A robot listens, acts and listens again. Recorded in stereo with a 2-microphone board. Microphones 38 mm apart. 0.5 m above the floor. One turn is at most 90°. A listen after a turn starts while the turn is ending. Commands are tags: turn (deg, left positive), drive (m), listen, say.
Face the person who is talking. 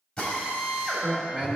<turn deg="-30"/>
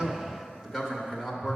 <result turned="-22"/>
<turn deg="-10"/>
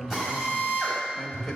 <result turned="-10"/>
<listen/>
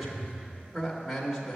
<say>Facing the man speaking, 1 to 2 m away.</say>